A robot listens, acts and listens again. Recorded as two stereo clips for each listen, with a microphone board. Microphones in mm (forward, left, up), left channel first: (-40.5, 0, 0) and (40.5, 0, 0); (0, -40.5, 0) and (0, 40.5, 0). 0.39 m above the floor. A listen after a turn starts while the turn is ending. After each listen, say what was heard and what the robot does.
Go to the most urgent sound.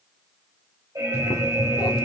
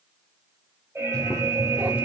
The alarm: 35° left. Turn 35° left.
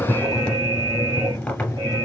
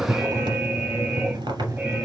The alarm is now 10° left. Turn 10° left.
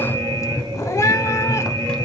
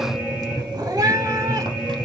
Drive 1.0 m forward.
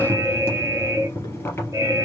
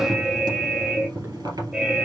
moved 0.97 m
The alarm is now 10° left. Turn 10° left.
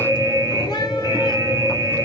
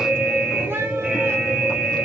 Drive 1.0 m forward.
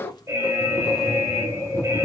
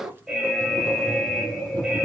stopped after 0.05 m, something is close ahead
Arrived at the alarm, straight ahead.